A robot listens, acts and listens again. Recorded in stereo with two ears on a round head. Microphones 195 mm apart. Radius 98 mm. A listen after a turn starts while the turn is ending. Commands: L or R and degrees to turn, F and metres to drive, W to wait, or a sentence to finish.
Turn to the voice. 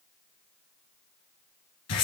W
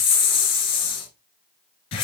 W
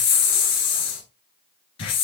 I can't make out anyone speaking to turn to.